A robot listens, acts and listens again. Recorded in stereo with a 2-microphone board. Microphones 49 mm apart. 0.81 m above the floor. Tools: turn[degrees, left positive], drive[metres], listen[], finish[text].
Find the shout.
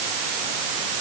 Action: listen[]
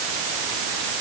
Action: listen[]
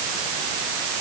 Action: finish[I can't make out a shout.]